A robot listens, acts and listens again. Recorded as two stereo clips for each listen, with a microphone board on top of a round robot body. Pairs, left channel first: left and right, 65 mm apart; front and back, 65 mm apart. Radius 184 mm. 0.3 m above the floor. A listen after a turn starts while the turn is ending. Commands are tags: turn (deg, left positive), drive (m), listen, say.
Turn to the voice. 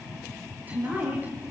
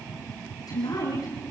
<turn deg="-25"/>
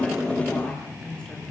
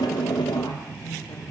<turn deg="10"/>
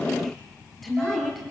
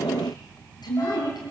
<say>Found it: a woman speaking, straight ahead, over 4 m away.</say>